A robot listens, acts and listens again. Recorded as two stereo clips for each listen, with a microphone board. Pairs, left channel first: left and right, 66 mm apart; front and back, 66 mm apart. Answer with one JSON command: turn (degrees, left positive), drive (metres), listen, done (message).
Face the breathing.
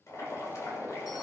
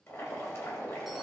{"listen": true}
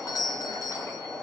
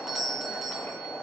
{"listen": true}
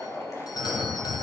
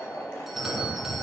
{"turn": -15}
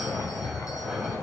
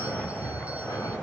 {"done": "Found it: breathing, straight ahead, over 4 m away."}